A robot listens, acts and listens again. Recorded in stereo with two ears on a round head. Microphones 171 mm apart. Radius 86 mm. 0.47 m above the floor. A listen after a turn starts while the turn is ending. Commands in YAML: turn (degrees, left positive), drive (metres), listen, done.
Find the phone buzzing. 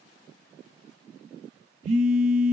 turn: -90
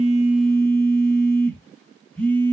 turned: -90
turn: 10
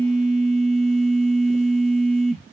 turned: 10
done: "Found it: a phone buzzing, straight ahead."